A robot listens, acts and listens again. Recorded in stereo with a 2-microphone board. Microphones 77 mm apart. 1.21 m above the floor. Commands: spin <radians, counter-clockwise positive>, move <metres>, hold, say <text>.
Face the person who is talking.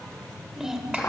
spin -0.52
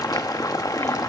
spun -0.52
hold
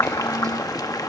hold
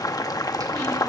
say I heard a child speaking, but can't make it out now. It was about 25° left or 145° right.